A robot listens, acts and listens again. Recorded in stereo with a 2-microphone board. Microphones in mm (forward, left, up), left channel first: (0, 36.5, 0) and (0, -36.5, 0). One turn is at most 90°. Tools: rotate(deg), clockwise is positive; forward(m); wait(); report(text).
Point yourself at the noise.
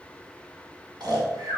rotate(70)
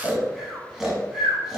report("Found it: snoring, straight ahead.")